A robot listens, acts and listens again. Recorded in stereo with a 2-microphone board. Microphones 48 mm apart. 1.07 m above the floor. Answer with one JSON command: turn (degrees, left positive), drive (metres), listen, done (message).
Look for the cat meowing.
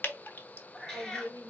{"turn": 30}
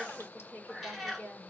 {"done": "Facing the cat meowing."}